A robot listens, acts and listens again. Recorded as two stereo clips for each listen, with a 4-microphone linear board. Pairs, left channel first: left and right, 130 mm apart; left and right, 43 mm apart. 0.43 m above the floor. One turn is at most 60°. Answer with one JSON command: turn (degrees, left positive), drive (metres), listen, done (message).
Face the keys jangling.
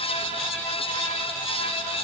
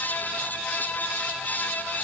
{"listen": true}
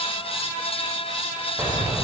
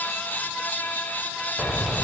{"turn": -30}
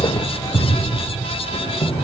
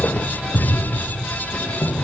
{"turn": 50}
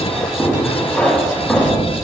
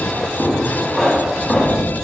{"turn": 10}
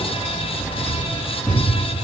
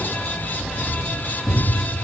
{"done": "Facing the keys jangling."}